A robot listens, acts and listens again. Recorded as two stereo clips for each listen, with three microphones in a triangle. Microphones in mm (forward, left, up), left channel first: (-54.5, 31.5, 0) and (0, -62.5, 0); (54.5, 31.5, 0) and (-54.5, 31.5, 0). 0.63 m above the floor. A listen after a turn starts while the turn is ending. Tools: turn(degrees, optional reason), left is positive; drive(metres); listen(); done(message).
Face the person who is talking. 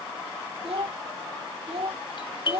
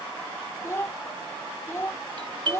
turn(degrees=-60, reason="The child speaking: 60° right.")
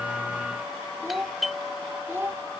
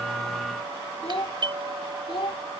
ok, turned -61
done("Found it: a child speaking, straight ahead.")